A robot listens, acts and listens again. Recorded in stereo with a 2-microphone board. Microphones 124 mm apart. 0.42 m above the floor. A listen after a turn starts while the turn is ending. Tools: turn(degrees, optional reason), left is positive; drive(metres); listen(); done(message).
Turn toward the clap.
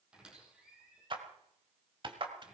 turn(degrees=-45, reason="The clap: about 45° right or 135° right.")
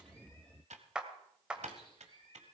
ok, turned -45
turn(degrees=-10, reason="So it is at 10° right.")
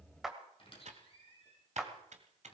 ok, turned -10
done("Found it: a clap, straight ahead.")